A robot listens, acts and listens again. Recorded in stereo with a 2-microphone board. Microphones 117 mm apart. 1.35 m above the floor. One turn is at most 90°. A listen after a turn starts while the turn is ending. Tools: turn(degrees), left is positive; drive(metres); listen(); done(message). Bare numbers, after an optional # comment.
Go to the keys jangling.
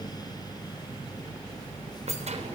turn(-90)
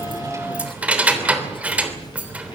# So it is at 10° right.
turn(-10)
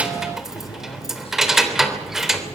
drive(1.0)
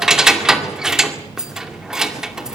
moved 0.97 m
drive(1.0)
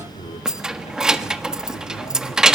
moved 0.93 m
drive(1.0)
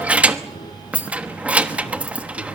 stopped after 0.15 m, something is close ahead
# The keys jangling is now 10° right.
turn(-10)
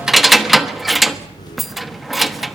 done("I am next to the keys jangling.")